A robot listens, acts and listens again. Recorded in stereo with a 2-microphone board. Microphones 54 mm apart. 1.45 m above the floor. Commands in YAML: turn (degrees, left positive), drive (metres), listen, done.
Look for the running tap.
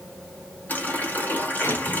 turn: 30
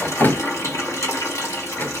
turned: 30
turn: 120
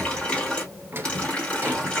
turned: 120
turn: 20
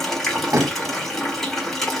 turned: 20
turn: 10
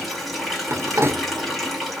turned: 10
done: "Found it: a running tap, straight ahead."